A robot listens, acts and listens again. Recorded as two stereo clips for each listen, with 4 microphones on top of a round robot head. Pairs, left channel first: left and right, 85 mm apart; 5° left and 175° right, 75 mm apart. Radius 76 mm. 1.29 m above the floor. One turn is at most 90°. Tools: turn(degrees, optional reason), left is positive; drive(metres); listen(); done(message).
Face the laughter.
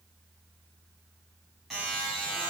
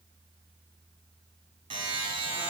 listen()
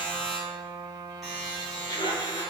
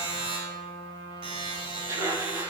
turn(degrees=90, reason="The laughter: 135° left.")
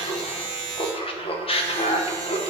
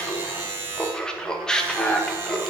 turn(degrees=85, reason="The laughter is now 85° left.")
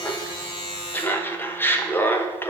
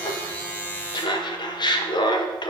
turn(degrees=20, reason="The laughter is now 20° left.")
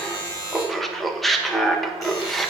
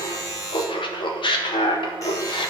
done("Facing the laughter, 1 to 2 m away.")